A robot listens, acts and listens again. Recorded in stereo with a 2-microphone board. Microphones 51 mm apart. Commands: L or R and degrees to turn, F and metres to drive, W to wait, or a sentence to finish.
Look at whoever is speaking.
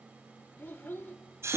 L45
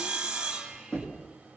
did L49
W
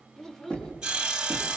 L10
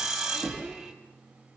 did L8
W
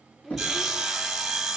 Facing the child speaking, 1 to 2 m away.